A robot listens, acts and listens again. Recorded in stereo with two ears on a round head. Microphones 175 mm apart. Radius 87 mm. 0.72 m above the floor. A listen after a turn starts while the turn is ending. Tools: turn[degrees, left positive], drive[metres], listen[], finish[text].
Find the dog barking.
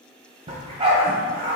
Thought: The dog barking: about 30° right or 150° right.
Action: turn[-30]
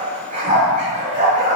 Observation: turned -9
Thought: The dog barking: about 40° right or 140° right.
Action: turn[-40]
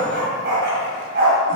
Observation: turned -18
Thought: So it is at 125° right.
Action: turn[-125]
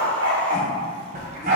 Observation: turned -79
Thought: The dog barking is now 45° right.
Action: turn[-45]
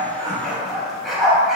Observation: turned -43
Action: finish[Facing the dog barking.]